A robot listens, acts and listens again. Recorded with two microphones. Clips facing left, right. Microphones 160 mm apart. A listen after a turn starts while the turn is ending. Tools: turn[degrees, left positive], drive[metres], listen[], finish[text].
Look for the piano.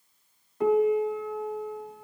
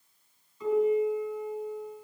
Thought: The piano: about 65° left or 115° left.
Action: turn[65]
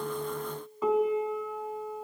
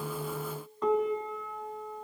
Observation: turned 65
Action: finish[Facing the piano.]